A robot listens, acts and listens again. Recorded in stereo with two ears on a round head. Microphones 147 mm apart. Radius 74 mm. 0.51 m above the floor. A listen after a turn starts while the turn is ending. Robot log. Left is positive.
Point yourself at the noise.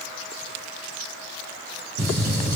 note: The gunshot: about 70° right or 110° right.
cmd yaw -70
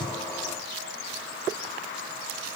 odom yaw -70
cmd idle
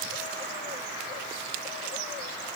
end: I heard a gunshot, but can't make it out now. It was about straight ahead or 40° right.